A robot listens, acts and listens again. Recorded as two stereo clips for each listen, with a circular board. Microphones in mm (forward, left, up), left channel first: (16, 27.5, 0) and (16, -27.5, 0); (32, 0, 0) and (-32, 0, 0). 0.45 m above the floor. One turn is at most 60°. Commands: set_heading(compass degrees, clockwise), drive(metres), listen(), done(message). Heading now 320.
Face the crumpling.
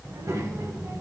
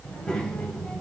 listen()
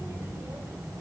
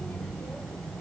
listen()
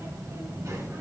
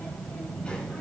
done("I can't make out crumpling to turn to.")